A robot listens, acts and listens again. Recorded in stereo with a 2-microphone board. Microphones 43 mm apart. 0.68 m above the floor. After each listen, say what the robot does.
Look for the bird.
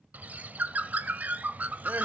Turn 45° right.
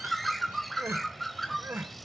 Found it: a bird, straight ahead.